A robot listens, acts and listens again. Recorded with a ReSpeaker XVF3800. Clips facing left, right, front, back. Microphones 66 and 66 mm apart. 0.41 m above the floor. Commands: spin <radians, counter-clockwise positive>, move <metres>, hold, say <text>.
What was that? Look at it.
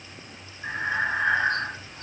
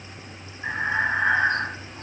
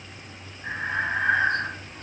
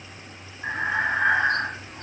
spin -2.88
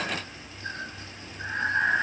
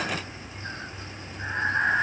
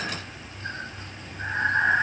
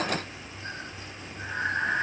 spin -0.44
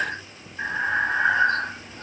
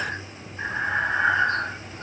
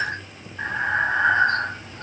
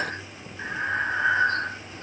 say Facing the breathing, 1 to 2 m away.